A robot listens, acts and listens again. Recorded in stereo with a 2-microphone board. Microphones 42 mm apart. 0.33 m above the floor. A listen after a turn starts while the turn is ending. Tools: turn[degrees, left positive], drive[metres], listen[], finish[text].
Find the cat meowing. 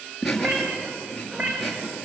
Thought: The cat meowing: about 35° right or 145° right.
Action: turn[-35]
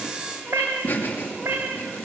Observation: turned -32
Thought: So it is at 100° right.
Action: turn[-100]
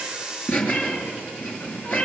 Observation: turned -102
Thought: The cat meowing is now 25° left.
Action: turn[25]
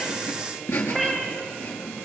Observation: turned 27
Action: finish[Facing the cat meowing, over 4 m away.]